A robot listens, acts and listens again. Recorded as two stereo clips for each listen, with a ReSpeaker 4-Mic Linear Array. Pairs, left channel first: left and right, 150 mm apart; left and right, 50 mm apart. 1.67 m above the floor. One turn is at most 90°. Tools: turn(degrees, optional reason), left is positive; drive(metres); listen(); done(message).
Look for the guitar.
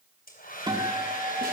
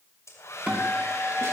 turn(degrees=-30, reason="The guitar: about 30° right or 150° right.")
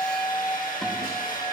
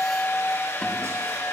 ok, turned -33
done("Found it: a guitar, straight ahead.")